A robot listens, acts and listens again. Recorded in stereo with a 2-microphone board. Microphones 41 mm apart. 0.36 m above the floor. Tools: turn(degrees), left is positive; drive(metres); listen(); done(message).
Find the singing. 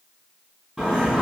turn(degrees=-30)
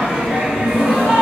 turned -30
turn(degrees=-145)
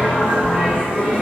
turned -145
turn(degrees=-20)
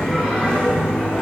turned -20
done("Facing the singing, 1 to 2 m away.")